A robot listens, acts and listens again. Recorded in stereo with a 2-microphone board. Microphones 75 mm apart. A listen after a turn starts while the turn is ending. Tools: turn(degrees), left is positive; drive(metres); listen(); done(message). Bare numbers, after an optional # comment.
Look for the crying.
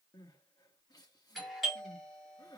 # The crying: about 60° left or 120° left.
turn(60)
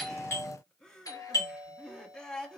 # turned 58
# So it is at 10° left.
turn(10)
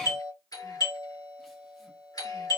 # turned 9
listen()
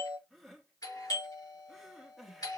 done("Found it: crying, straight ahead.")